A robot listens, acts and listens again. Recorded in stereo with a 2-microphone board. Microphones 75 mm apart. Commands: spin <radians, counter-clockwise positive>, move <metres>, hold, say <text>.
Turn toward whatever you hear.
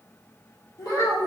spin 0.96
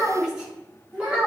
spin -0.35
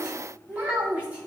spin -0.35
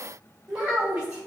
spin -0.26
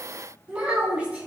spin -0.26
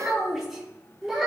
say Found it: a child speaking, straight ahead, 2 to 4 m away.